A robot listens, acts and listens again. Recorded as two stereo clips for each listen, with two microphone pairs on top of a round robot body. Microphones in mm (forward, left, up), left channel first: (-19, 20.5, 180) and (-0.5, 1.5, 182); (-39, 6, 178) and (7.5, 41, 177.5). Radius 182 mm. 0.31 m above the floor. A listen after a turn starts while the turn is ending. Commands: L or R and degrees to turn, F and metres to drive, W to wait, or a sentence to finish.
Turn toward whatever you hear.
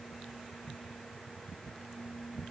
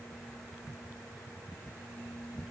W
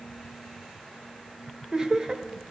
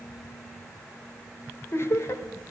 R110
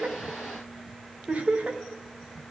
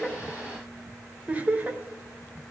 R25
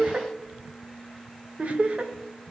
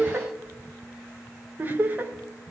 R15
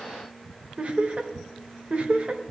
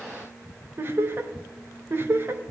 Found it: laughter, straight ahead, 1 to 2 m away.